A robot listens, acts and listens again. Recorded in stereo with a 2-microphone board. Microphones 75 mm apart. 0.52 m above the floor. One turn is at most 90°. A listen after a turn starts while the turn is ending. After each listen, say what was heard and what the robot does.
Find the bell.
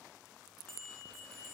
Turn 30° left.
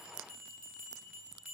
So it is at 20° right. Turn 20° right.
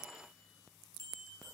Facing the bell.